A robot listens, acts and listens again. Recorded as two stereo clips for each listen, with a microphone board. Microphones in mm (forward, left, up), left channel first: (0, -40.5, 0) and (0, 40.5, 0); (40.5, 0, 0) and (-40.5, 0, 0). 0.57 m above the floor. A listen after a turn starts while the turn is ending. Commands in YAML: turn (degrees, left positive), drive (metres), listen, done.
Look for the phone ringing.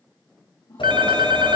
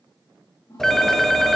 turn: 85
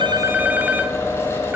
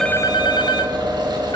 turn: 20
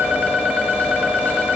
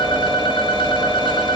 listen: true
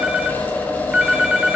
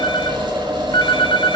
turn: 10
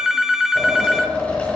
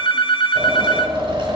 done: "Found it: a phone ringing, straight ahead, 1 to 2 m away."